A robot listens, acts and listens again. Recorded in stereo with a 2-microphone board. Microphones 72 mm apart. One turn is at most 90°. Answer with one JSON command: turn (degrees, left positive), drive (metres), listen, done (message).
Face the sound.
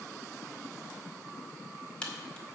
{"turn": 15}
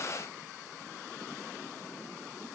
{"listen": true}
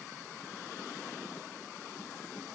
{"done": "I heard a crack, but can't make it out now. It was about straight ahead or 150° left."}